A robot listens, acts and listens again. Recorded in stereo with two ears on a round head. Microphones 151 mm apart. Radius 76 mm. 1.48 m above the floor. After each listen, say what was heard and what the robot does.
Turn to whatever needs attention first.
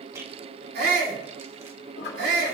The shout: about 60° right or 120° right. Turn 60° right.
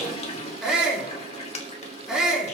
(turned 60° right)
Found it: a shout, straight ahead, over 4 m away.